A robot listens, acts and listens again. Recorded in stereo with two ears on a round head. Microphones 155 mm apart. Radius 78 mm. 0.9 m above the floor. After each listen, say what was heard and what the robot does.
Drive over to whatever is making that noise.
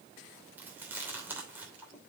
Turn 30° right.
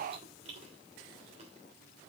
So it is at 140° right. Turn 140° right.
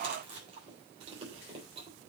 The chewing is now 35° right. Turn 35° right.
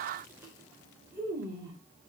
The chewing is now 15° right. Turn 15° right.
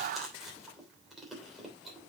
Drive 1.0 m forward.
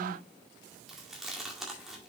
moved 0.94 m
Drive 1.0 m forward.
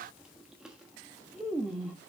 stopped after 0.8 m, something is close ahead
I am next to the chewing.